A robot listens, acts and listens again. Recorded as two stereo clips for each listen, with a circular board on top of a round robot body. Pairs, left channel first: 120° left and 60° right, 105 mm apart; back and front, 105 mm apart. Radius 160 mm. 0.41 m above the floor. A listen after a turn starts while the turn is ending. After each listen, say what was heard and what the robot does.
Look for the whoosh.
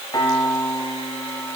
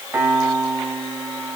Keep listening.
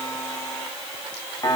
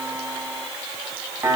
Keep listening.
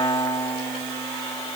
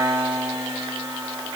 I can't make out a whoosh, only a piano.